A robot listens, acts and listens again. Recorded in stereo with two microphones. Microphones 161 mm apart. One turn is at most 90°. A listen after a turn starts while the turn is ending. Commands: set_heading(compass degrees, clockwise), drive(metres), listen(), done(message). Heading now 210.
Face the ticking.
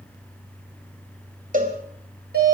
listen()
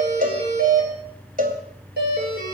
listen()
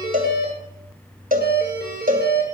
done("I can't make out ticking, only a doorbell and a cowbell.")